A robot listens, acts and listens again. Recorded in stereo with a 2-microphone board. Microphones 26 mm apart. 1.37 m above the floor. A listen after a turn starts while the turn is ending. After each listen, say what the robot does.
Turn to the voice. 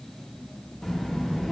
Turn 25° left.
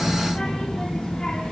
Turn 130° left.
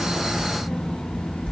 Turn 55° left.
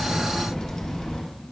Turn 20° left.
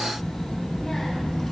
Facing the child speaking, 1 to 2 m away.